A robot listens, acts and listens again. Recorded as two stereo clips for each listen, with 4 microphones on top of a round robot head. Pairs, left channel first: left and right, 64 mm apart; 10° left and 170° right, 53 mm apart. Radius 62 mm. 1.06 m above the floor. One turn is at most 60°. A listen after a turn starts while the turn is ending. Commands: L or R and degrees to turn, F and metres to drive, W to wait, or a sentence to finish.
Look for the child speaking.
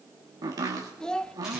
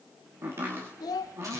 L10
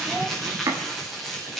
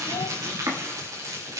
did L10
W
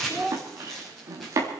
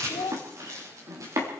Found it: a child speaking, straight ahead, 1 to 2 m away.